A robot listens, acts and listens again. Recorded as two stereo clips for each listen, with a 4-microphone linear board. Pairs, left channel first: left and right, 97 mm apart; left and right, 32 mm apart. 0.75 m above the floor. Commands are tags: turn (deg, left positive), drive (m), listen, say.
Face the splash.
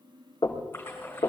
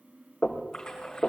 <turn deg="20"/>
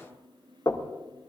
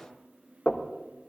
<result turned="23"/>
<listen/>
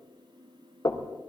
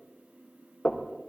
<say>I heard a splash, but can't make it out now. It was about 5° right or 135° left.</say>